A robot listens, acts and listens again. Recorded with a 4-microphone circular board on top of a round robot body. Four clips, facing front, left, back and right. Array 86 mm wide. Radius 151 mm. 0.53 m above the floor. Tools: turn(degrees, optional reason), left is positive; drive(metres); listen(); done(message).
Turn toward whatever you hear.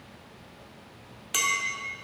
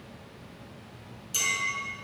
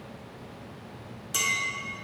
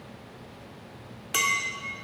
turn(degrees=-75, reason="The clink: 75° right.")
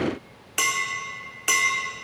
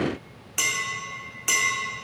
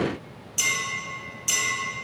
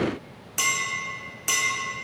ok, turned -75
done("Found it: a clink, straight ahead, under 1 m away.")